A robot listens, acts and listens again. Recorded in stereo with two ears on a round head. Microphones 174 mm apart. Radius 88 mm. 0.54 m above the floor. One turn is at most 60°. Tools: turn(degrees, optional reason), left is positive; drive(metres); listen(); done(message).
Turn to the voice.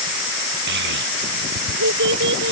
turn(degrees=-60, reason="The child speaking: about 65° right or 115° right.")
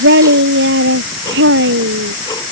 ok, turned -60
turn(degrees=-55, reason="So it is at 55° right.")
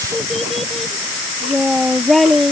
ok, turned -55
done("Found it: a child speaking, straight ahead.")